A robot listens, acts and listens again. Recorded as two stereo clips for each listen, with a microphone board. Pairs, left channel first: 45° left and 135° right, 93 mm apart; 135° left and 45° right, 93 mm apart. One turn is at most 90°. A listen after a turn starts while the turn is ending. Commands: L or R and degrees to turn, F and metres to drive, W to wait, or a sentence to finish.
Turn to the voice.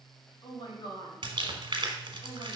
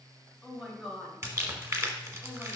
L45
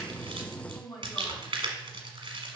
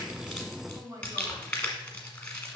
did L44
Facing the woman speaking.